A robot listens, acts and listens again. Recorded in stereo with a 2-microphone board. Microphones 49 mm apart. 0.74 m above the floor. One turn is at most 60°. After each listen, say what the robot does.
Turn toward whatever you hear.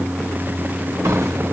Turn 60° right.
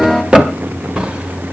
Turn 20° right.
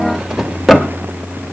Found it: a drawer, straight ahead.